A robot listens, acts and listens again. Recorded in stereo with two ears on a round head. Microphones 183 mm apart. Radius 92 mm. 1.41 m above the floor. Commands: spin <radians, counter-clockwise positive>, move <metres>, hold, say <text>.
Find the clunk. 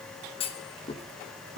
spin 0.52
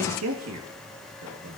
hold
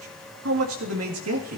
say I heard a clunk, but can't make it out now. It was about straight ahead or 120° left.